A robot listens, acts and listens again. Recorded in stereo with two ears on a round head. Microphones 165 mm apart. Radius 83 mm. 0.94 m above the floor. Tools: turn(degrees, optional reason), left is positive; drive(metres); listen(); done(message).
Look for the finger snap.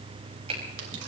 turn(degrees=-35, reason="The finger snap: about 35° right or 145° right.")
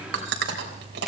done("Facing the finger snap.")